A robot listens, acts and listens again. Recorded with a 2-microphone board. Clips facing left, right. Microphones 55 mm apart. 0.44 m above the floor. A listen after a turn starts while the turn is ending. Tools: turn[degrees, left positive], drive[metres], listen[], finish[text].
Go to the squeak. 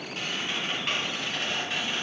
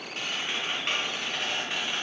Action: turn[30]
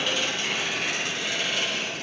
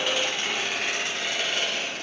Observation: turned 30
Thought: So it is at 25° right.
Action: turn[-25]
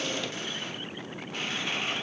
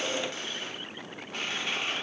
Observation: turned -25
Action: drive[1.0]
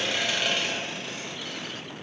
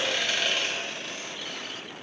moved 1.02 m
Action: drive[1.0]
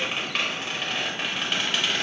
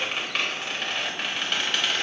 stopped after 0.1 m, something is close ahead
Action: finish[I am next to the squeak.]